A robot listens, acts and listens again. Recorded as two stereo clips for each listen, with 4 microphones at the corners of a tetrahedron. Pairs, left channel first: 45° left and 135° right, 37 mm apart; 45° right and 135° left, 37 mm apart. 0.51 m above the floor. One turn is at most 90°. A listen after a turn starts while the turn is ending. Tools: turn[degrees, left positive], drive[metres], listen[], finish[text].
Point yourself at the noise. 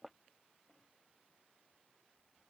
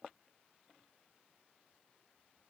Action: listen[]
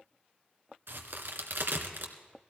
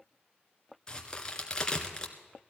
Thought: The crack: 115° right.
Action: turn[-90]
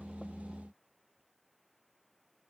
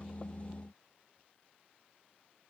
Thought: Nothing new. It was at 25° right.
Action: turn[-25]
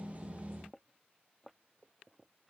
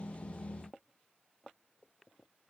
Action: finish[I heard a crack from this way, but can't make it out now.]